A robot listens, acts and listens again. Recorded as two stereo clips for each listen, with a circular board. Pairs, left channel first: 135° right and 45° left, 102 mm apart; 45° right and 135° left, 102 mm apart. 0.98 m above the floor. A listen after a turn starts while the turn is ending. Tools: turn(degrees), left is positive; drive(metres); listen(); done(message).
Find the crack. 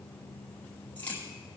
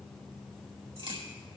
turn(degrees=155)
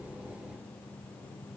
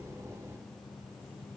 done("Facing where the crack came from. I can't hear it now.")